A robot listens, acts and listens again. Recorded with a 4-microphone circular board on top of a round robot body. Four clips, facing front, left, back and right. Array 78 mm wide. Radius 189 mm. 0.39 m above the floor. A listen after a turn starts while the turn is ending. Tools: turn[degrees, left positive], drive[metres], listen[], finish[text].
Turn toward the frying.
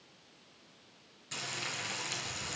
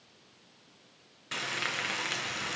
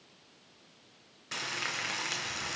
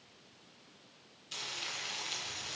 Thought: The frying: 120° left.
Action: turn[120]
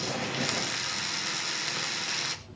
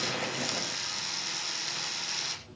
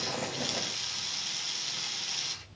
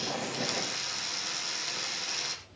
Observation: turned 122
Action: finish[Found it: frying, straight ahead.]